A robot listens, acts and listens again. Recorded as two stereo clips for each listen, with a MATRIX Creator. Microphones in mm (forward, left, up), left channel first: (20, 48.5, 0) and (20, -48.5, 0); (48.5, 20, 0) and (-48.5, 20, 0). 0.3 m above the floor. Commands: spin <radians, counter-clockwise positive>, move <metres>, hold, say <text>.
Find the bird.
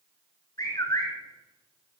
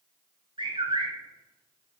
spin 2.53
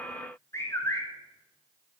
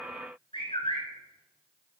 spin 0.52
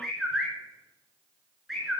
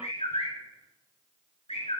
say Facing the bird.